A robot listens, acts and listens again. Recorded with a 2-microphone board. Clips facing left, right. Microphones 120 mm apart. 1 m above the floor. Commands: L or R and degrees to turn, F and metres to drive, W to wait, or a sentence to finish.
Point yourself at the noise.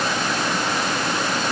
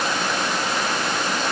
W
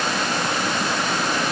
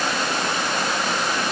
W
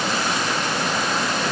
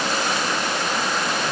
I can't make out anything to turn to.